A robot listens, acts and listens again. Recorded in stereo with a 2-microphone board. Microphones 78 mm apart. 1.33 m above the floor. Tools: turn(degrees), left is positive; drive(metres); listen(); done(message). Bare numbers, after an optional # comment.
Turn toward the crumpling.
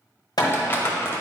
# The crumpling: about 30° left or 150° left.
turn(30)
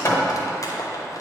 # So it is at 115° left.
turn(115)
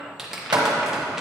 # The crumpling is now 10° right.
turn(-10)
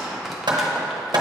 done("Facing the crumpling.")